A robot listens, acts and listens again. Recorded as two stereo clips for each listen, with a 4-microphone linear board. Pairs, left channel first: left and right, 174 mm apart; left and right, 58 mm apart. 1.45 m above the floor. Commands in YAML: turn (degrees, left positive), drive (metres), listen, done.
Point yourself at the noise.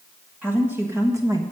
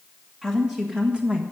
turn: -25
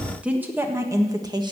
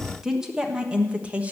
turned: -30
turn: -30
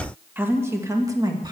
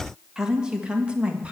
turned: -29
turn: -25
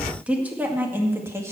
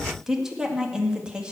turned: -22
turn: -15
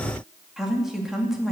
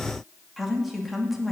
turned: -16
turn: -30
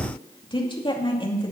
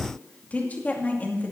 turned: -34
turn: 30
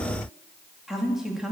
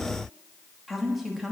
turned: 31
done: "Found it: a woman speaking, straight ahead, 2 to 4 m away."